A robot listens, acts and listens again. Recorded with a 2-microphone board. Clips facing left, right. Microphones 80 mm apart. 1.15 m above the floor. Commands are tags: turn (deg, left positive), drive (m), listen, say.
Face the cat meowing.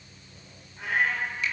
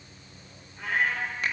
<turn deg="30"/>
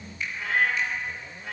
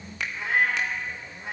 <turn deg="-25"/>
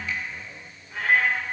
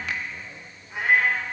<turn deg="-15"/>
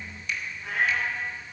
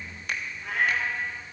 <say>Found it: a cat meowing, straight ahead, over 4 m away.</say>